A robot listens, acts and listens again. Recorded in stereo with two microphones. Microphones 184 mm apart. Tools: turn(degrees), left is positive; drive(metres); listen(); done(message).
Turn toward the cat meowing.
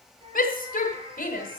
turn(degrees=-30)
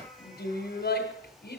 listen()
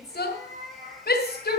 turn(degrees=-135)
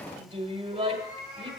turn(degrees=-15)
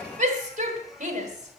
listen()
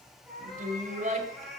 done("Facing the cat meowing.")